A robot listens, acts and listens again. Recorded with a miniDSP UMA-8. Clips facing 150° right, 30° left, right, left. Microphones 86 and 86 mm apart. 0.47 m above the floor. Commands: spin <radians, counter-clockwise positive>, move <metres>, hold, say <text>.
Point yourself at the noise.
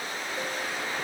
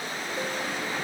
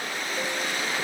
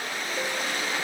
hold
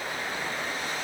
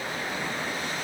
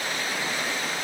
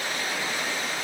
hold
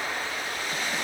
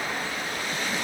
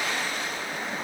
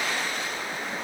say I can't make out anything to turn to.